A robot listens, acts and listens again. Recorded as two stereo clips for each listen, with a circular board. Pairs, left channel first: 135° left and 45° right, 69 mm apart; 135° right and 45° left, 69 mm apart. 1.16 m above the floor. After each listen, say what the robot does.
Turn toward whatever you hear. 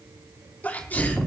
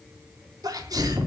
Turn 70° left.
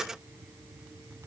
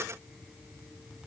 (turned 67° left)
I heard a sneeze from this way, but can't make it out now.